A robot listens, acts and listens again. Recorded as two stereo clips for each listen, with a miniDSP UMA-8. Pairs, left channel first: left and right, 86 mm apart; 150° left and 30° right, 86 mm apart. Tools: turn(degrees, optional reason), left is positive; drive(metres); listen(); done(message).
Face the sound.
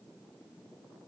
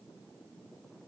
listen()
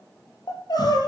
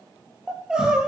turn(degrees=50, reason="The crying: 50° left.")
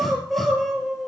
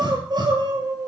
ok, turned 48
done("Facing the crying.")